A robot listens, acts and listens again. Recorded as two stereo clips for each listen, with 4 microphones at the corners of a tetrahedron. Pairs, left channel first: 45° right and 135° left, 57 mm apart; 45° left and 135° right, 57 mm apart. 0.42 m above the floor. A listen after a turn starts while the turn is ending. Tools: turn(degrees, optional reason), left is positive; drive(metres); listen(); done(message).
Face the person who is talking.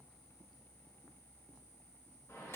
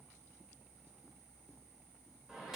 listen()
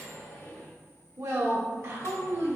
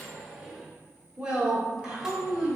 turn(degrees=155, reason="The woman speaking: 155° left.")
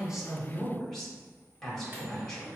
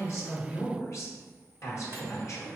turn(degrees=35, reason="The woman speaking is now 35° left.")
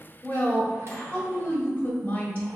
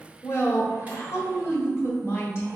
turn(degrees=15, reason="The woman speaking is now 15° left.")
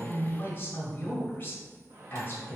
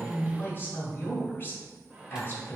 done("Found it: a woman speaking, straight ahead, 1 to 2 m away.")